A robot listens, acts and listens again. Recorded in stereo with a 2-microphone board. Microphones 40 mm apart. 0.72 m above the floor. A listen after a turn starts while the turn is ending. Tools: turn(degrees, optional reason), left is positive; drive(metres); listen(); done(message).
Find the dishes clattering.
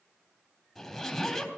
listen()
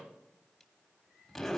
listen()
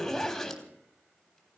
done("I can't make out dishes clattering, only a zipper.")